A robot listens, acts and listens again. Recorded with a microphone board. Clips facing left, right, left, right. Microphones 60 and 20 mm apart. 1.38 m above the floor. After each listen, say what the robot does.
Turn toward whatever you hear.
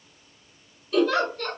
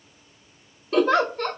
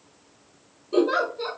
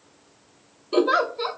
Turn 45° right.
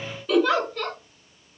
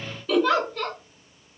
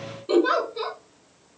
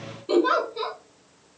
Facing the giggle.